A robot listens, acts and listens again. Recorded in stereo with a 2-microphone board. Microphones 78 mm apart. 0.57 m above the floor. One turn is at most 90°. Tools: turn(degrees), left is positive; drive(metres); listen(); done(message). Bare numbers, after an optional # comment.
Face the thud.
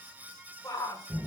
listen()
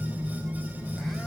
listen()
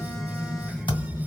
turn(90)
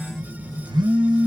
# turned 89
done("I heard a thud from this way, but can't make it out now.")